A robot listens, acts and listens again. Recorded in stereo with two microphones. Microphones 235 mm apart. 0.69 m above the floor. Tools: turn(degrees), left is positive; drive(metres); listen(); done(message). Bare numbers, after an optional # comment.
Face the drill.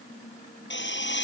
# The drill: about 50° left or 130° left.
turn(50)
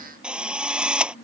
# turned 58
done("Found it: a drill, straight ahead.")